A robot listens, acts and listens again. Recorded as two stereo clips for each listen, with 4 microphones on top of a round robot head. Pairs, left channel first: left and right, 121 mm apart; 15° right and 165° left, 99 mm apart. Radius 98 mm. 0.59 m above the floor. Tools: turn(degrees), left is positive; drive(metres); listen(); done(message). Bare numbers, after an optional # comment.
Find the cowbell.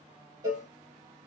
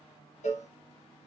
# The cowbell: 20° right.
turn(-20)
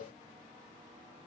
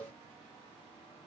# The cowbell is now 10° right.
turn(-10)
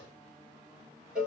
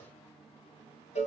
done("Facing the cowbell.")